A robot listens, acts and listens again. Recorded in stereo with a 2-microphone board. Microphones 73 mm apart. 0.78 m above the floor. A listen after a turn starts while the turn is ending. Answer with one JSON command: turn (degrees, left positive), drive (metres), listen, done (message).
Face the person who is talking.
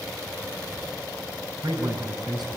{"turn": -70}
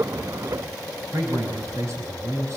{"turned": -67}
{"turn": -45}
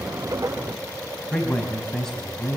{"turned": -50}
{"done": "Found it: a man speaking, straight ahead, over 4 m away."}